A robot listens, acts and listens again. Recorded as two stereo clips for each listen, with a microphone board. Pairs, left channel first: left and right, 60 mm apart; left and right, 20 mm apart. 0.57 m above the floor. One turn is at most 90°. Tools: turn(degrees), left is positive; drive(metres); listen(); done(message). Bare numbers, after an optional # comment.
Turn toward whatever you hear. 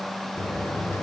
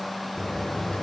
# The buzzer: about 45° left or 135° left.
turn(45)
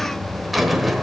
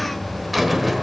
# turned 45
done("Facing the buzzer.")